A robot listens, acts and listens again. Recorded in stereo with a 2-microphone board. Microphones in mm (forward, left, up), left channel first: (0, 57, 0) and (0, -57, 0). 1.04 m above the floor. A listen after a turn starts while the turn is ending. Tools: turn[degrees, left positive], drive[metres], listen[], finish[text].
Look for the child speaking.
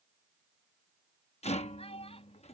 Thought: The child speaking: about 65° left or 115° left.
Action: turn[65]
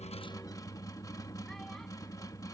Action: listen[]
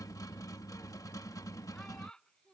Thought: So it is at 10° left.
Action: turn[10]
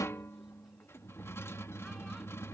Action: listen[]
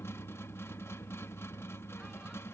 Action: listen[]
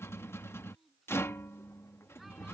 Action: finish[Facing where the child speaking came from. I can't hear it now.]